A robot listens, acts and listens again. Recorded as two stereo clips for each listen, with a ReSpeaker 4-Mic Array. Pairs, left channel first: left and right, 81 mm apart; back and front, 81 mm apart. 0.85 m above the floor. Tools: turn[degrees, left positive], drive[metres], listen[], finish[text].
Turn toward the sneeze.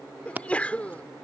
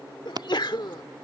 Thought: The sneeze: 165° left.
Action: turn[165]
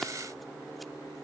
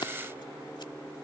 Action: finish[I heard a sneeze from this way, but can't make it out now.]